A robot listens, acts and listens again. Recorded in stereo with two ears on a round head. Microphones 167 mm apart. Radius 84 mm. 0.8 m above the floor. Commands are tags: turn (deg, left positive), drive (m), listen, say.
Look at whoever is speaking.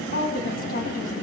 <turn deg="50"/>
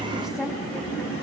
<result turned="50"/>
<listen/>
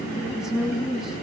<say>Facing the woman speaking, over 4 m away.</say>